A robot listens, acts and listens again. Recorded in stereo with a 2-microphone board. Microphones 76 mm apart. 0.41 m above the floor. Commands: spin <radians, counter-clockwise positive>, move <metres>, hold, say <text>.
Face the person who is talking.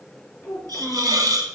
spin 0.26
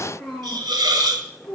say Found it: a child speaking, straight ahead, over 4 m away.